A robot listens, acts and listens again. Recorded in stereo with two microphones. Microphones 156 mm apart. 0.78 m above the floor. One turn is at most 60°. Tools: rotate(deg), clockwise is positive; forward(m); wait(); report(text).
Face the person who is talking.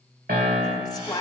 rotate(-25)
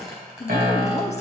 rotate(-60)
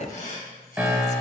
rotate(-60)
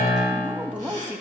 rotate(10)
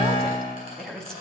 report("Found it: a woman speaking, straight ahead.")